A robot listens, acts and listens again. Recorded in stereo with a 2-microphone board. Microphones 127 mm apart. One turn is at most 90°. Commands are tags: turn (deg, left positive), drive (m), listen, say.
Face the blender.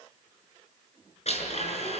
<turn deg="60"/>
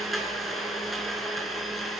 <say>Found it: a blender, straight ahead.</say>